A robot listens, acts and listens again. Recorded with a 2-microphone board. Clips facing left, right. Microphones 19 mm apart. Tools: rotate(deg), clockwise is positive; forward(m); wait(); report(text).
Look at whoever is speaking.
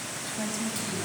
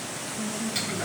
rotate(-65)
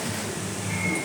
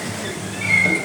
wait()
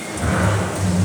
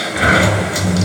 wait()
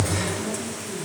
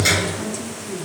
rotate(20)
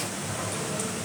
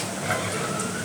wait()
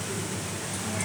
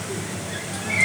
wait()
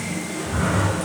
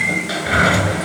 report("I heard a woman speaking from this way, but can't make it out now.")